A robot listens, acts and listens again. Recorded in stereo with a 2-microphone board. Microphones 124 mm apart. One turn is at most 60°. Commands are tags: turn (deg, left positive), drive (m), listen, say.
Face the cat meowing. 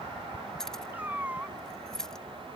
<turn deg="-30"/>
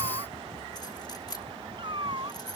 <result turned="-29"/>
<turn deg="-60"/>
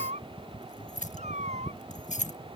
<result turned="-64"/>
<turn deg="-60"/>
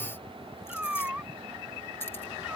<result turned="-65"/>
<turn deg="-10"/>
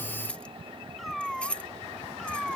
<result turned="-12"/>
<say>Found it: a cat meowing, straight ahead.</say>